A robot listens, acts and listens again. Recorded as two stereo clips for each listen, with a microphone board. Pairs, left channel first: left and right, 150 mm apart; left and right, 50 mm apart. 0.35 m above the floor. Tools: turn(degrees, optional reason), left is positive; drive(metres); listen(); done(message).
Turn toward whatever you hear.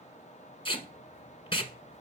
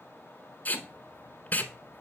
turn(degrees=35, reason="The tape being pulled: about 35° left or 145° left.")
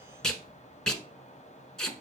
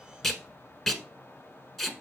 done("Found it: tape being pulled, straight ahead, 1 to 2 m away.")